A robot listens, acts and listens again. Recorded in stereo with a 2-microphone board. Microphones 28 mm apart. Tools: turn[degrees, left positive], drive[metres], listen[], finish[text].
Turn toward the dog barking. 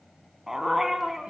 Action: turn[-30]
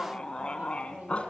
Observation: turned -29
Thought: So it is at 45° left.
Action: turn[45]
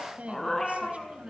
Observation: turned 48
Thought: The dog barking is now 15° left.
Action: turn[15]
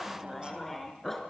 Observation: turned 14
Thought: The dog barking is now 10° left.
Action: turn[10]
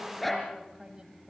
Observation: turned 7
Action: finish[Found it: a dog barking, straight ahead, 2 to 4 m away.]